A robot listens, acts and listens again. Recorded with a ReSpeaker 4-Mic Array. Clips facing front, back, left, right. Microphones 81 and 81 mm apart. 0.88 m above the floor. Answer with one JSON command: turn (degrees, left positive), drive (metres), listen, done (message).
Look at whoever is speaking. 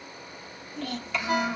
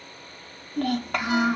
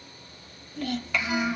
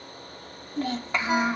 {"turn": -145}
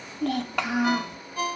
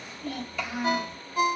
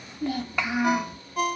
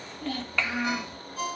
{"turn": 15}
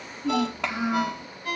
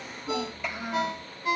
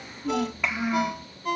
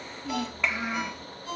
{"done": "Found it: a child speaking, straight ahead."}